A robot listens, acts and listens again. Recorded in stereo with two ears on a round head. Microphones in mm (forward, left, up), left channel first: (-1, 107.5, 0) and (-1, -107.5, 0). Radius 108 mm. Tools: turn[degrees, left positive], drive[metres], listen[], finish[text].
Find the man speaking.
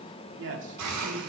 Thought: The man speaking: about 50° right or 130° right.
Action: turn[-50]
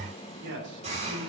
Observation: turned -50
Thought: So it is at 70° right.
Action: turn[-70]
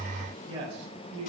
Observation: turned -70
Thought: The man speaking is now 30° right.
Action: turn[-30]
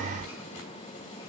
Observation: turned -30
Action: listen[]
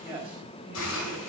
Action: finish[Facing the man speaking, over 4 m away.]